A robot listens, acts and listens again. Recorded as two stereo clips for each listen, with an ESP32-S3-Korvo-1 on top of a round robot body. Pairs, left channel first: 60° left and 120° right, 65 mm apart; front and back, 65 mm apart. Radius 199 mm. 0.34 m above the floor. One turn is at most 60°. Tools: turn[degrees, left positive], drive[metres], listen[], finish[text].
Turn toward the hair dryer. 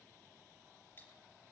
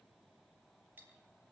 Action: listen[]
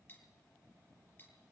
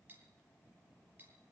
Action: listen[]
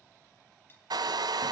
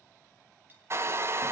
Thought: The hair dryer: 130° right.
Action: turn[-60]
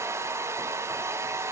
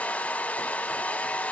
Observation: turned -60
Thought: The hair dryer is now 70° right.
Action: turn[-60]
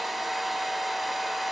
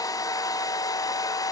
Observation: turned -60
Thought: The hair dryer is now 30° right.
Action: turn[-30]
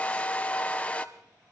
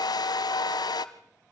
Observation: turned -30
Thought: The hair dryer is now 10° right.
Action: turn[-10]
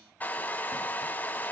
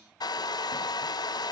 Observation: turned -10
Action: finish[Facing the hair dryer, under 1 m away.]